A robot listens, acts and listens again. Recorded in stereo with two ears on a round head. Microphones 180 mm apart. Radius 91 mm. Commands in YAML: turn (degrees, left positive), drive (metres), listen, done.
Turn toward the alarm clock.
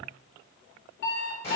turn: 55
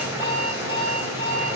turn: 30
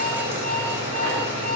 turn: 10
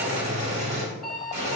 done: "Found it: an alarm clock, straight ahead, under 1 m away."